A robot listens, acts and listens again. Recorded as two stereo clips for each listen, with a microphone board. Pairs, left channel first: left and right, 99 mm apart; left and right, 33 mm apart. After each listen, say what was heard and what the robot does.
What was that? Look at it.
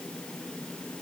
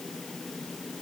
Keep listening.
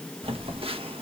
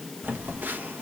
The phone buzzing: about 70° right or 110° right. Turn 70° right.
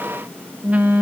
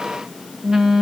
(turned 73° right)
So it is at 15° right. Turn 15° right.
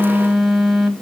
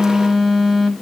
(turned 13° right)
Found it: a phone buzzing, straight ahead, 1 to 2 m away.